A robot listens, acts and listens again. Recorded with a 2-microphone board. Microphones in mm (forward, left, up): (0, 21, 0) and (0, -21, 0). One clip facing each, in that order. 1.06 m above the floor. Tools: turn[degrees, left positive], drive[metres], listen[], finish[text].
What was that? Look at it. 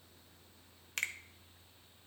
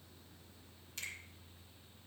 Thought: The finger snap: about 60° left or 120° left.
Action: turn[60]
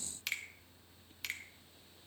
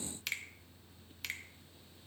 Action: finish[Facing the finger snap.]